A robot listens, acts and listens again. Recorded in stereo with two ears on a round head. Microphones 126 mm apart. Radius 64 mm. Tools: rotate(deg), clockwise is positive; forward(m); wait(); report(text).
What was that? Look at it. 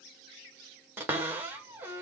rotate(30)
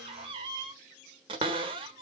rotate(135)
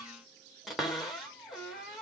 report("Found it: a cupboard door, straight ahead.")